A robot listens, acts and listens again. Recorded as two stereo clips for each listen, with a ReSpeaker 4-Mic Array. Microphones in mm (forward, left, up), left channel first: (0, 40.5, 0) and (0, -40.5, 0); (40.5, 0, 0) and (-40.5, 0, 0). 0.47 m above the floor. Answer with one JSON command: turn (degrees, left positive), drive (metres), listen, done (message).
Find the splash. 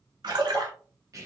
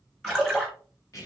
{"turn": -80}
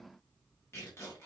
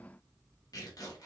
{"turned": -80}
{"done": "I heard a splash from this way, but can't make it out now."}